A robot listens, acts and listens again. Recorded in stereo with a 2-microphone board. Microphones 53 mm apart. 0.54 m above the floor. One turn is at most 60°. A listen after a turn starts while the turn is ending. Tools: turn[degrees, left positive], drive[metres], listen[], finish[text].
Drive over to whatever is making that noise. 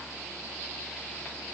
Action: listen[]
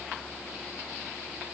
Action: listen[]
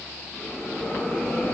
Thought: The bell: about 45° left or 135° left.
Action: turn[45]
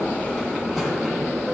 Action: drive[1.0]
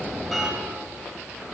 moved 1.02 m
Action: drive[1.0]
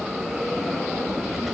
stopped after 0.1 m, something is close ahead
Action: finish[Arrived at the bell, straight ahead.]